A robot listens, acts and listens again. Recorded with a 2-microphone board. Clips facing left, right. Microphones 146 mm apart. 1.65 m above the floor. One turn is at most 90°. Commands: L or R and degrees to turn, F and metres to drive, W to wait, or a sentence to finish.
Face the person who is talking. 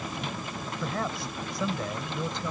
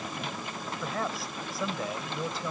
R30
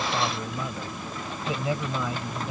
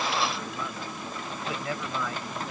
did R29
L20
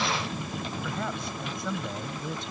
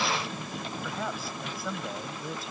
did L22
Found it: a man speaking, straight ahead.